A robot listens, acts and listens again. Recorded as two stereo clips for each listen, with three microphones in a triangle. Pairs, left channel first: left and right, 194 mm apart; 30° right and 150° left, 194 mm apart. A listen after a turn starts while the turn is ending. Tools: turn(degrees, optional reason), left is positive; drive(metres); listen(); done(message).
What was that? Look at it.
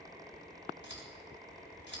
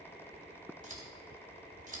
turn(degrees=105, reason="The scissors: 105° left.")
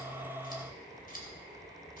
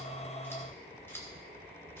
turn(degrees=50, reason="The scissors is now 50° left.")
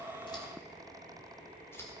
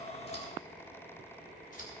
turn(degrees=15, reason="The scissors is now 15° left.")
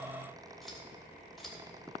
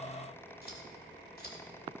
done("Facing the scissors.")